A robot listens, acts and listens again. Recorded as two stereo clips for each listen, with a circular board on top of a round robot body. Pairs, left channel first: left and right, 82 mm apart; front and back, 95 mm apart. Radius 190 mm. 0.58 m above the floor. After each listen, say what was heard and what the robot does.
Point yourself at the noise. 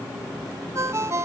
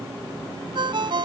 The ringtone: 145° right. Turn 145° right.
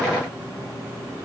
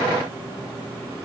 Keep listening.
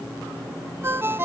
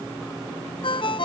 The ringtone is now 30° right. Turn 30° right.
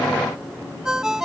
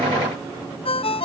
Facing the ringtone.